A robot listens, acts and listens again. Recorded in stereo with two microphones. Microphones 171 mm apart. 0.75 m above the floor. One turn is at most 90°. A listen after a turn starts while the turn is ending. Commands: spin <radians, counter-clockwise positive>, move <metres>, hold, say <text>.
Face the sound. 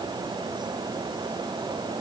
hold
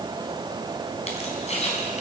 spin 0.70
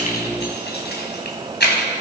spin 1.57
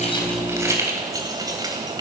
spin -0.44
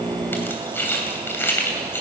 spin 0.26
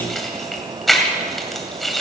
say Facing the keys jangling, 2 to 4 m away.